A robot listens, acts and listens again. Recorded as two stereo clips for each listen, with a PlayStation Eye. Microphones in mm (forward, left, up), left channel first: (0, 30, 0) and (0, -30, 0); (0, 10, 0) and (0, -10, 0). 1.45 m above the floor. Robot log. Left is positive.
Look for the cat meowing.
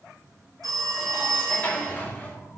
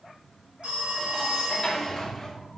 note: The cat meowing: about 60° left or 120° left.
cmd yaw +60
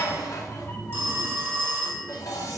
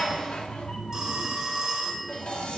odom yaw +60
note: So it is at 50° left.
cmd yaw +50
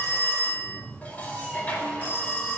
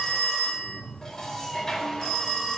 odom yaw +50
note: The cat meowing is now 20° right.
cmd yaw -20
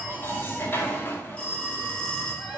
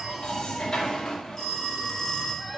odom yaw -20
note: The cat meowing is now 10° right.
cmd yaw -10
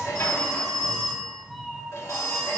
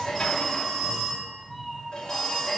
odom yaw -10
end: Facing the cat meowing, 1 to 2 m away.